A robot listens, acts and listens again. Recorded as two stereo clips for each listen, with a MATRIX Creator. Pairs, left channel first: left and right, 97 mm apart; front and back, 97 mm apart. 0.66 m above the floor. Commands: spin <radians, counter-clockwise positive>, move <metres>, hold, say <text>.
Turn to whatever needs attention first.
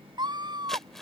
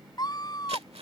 spin -0.79
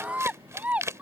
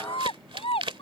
spin -0.26
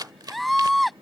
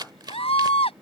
say Found it: a scream, straight ahead.